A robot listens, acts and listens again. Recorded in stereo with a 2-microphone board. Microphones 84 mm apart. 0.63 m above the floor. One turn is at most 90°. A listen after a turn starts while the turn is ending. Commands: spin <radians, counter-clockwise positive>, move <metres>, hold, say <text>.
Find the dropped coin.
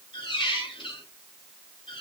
hold
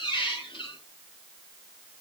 hold
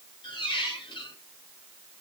say I can't make out a dropped coin, only a squeak.